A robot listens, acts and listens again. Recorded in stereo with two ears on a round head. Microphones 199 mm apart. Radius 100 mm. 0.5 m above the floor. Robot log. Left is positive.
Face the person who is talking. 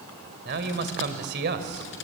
note: The man speaking: about 50° right or 130° right.
cmd yaw -50
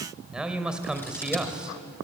end: Found it: a man speaking, straight ahead.